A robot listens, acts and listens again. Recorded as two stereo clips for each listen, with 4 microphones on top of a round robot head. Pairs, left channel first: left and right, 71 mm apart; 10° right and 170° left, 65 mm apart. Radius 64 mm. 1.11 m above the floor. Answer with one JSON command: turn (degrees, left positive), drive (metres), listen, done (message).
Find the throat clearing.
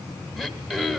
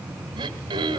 {"turn": -170}
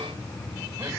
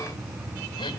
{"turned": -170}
{"listen": true}
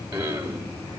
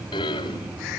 {"turn": -15}
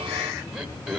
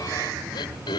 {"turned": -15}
{"done": "Found it: throat clearing, straight ahead, 1 to 2 m away."}